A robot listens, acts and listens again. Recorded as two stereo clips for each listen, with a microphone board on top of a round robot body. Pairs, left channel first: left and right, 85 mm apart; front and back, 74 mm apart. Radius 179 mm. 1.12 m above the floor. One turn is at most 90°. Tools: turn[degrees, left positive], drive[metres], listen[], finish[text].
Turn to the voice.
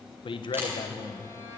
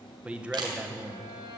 Thought: The man speaking: 105° left.
Action: turn[90]
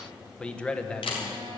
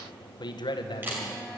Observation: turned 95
Thought: The man speaking is now 10° left.
Action: turn[10]
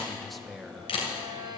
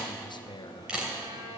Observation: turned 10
Action: finish[Facing the man speaking.]